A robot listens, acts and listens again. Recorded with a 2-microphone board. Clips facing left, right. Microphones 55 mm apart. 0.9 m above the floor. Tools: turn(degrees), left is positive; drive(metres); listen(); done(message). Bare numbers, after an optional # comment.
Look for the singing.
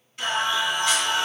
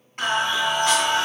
# The singing: about 35° right or 145° right.
turn(-35)
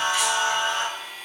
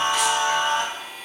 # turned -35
# So it is at 130° right.
turn(-130)
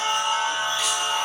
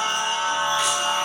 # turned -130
# The singing is now 65° right.
turn(-65)
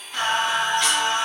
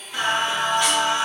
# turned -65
# The singing is now 10° right.
turn(-10)
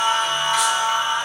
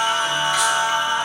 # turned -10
done("Facing the singing, 2 to 4 m away.")